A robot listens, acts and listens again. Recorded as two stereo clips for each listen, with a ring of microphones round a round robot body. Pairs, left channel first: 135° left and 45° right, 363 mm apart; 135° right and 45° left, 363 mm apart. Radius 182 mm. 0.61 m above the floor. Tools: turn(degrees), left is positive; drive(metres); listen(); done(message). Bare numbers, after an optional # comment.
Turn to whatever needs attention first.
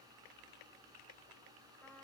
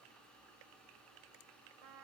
listen()
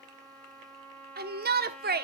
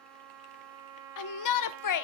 # The shout: 105° right.
turn(-105)
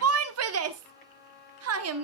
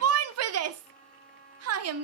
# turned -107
done("Facing the shout, 1 to 2 m away.")